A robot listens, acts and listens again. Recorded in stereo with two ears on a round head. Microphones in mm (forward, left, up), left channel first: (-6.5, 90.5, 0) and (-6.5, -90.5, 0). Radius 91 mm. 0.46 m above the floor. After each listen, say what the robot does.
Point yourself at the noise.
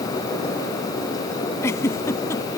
Turn 30° left.
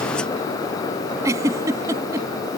Turn 15° right.
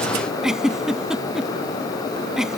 Found it: a giggle, straight ahead.